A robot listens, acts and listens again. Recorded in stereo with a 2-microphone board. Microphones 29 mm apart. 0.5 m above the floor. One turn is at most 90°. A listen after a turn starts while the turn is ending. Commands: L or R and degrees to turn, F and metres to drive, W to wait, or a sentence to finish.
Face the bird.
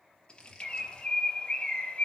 L40
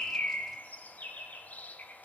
L90
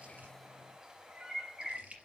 R20
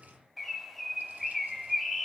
Found it: a bird, straight ahead, 2 to 4 m away.